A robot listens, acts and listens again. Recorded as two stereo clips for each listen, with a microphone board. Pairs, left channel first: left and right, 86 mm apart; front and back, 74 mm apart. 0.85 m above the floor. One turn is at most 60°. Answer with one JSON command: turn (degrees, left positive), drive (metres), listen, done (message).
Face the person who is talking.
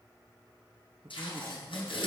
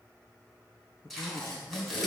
{"turn": -45}
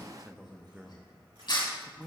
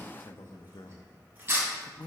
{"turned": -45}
{"turn": -10}
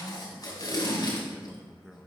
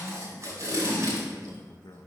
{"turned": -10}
{"done": "Found it: a man speaking, straight ahead, under 1 m away."}